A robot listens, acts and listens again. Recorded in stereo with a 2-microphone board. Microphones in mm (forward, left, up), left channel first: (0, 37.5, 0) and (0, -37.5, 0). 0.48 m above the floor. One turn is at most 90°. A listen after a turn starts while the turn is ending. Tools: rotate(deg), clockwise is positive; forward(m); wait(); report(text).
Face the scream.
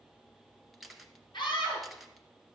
rotate(-70)
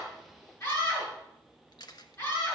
rotate(-40)
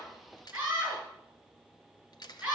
rotate(10)
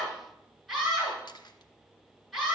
report("Found it: a scream, straight ahead.")